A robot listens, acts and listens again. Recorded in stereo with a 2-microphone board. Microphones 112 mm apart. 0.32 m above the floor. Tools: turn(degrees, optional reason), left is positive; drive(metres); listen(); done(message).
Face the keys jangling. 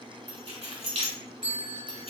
turn(degrees=-60, reason="The keys jangling: about 60° right or 120° right.")
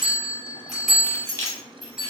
turn(degrees=30, reason="So it is at 30° left.")
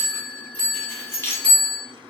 turn(degrees=25, reason="The keys jangling is now 25° left.")
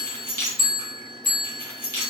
turn(degrees=20, reason="The keys jangling is now 20° left.")
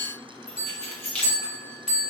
turn(degrees=10, reason="The keys jangling is now 10° left.")
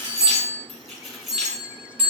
done("Facing the keys jangling, 1 to 2 m away.")